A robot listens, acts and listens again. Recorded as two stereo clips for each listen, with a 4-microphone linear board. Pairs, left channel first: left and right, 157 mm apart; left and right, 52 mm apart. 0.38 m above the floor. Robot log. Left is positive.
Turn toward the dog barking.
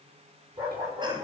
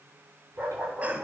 note: The dog barking: about 30° right or 150° right.
cmd yaw -30
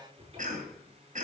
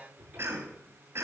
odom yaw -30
cmd idle
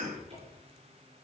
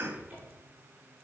cmd idle
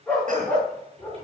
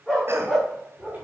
end: Facing the dog barking.